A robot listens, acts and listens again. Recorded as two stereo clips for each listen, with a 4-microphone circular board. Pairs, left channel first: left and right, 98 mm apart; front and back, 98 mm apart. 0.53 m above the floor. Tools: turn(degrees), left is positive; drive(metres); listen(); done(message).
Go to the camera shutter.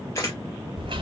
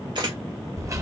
turn(degrees=145)
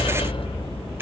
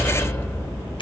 listen()
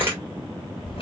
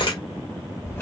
turn(degrees=-25)
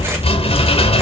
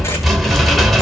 listen()
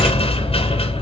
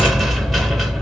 listen()
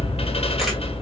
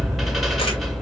done("I heard a camera shutter from this way, but can't make it out now. I did not reach it.")